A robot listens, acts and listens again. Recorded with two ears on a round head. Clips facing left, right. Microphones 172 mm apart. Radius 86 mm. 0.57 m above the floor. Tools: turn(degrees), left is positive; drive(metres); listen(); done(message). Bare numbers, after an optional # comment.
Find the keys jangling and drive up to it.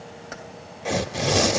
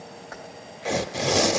# The keys jangling: about 35° left or 145° left.
turn(35)
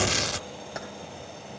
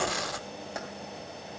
drive(1.0)
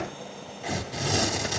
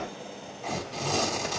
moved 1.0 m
listen()
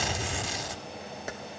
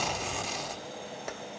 drive(1.0)
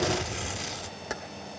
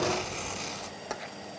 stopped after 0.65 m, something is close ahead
# The keys jangling is now 10° left.
turn(10)
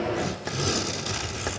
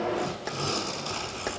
listen()
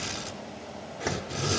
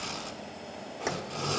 listen()
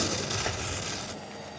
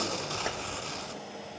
done("Facing where the keys jangling came from. I can't hear it now. I did not reach it.")